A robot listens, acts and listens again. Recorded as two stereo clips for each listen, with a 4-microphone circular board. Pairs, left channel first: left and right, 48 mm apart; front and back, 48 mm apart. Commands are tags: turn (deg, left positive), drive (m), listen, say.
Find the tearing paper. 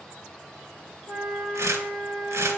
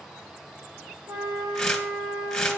<turn deg="-80"/>
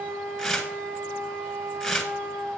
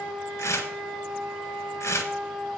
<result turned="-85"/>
<say>Facing the tearing paper, 1 to 2 m away.</say>